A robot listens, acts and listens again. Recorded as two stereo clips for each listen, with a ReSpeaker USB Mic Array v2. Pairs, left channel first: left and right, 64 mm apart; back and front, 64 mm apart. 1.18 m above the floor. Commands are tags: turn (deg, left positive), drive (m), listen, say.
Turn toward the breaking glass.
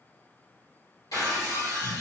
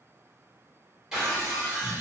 <turn deg="80"/>
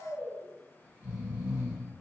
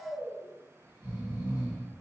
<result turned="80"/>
<say>Facing where the breaking glass came from. I can't hear it now.</say>